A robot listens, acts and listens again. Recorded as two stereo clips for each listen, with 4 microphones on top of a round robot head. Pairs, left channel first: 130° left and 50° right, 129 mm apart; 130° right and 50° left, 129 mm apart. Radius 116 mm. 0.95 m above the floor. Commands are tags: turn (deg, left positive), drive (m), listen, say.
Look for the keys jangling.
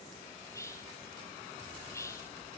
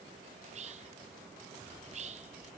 <listen/>
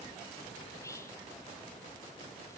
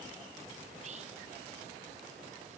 <listen/>
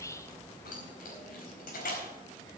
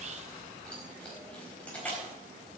<turn deg="150"/>
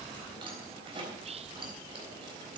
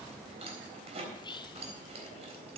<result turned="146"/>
<say>Facing the keys jangling, 2 to 4 m away.</say>